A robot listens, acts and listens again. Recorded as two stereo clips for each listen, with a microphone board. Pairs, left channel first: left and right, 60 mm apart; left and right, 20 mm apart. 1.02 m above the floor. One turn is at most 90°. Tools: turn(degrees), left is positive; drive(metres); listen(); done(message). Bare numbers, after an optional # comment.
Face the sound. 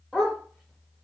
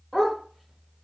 turn(30)
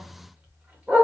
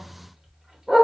# So it is at 30° right.
turn(-30)
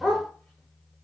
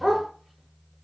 done("Facing the dog barking, 1 to 2 m away.")